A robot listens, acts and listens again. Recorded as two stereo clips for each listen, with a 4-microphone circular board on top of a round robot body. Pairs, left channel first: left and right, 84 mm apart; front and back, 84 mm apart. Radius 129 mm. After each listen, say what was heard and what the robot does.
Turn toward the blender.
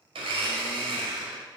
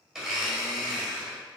The blender: 95° right. Turn 95° right.
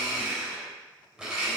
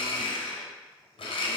The blender is now 10° right. Turn 10° right.
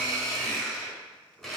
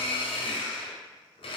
Found it: a blender, straight ahead, under 1 m away.